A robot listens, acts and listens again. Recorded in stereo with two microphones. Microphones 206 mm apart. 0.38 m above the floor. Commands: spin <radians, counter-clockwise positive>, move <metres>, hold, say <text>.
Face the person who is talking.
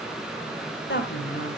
spin 0.96
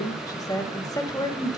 spin 0.35
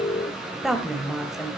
say Facing the woman speaking, 1 to 2 m away.